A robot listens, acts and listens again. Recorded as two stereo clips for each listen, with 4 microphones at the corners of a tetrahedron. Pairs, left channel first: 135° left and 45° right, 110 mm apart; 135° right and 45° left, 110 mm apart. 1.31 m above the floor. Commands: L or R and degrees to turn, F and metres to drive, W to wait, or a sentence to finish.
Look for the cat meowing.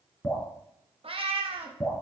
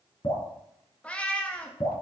R60
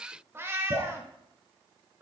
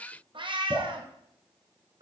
L20
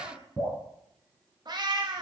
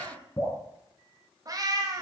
Found it: a cat meowing, straight ahead, 1 to 2 m away.